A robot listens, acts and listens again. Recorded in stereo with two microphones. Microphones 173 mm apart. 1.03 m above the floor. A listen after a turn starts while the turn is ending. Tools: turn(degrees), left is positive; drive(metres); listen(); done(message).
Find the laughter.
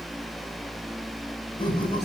turn(degrees=30)
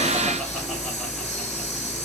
listen()
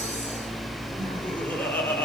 turn(degrees=10)
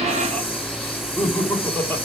turn(degrees=10)
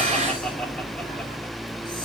listen()
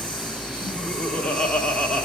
done("Facing the laughter, 2 to 4 m away.")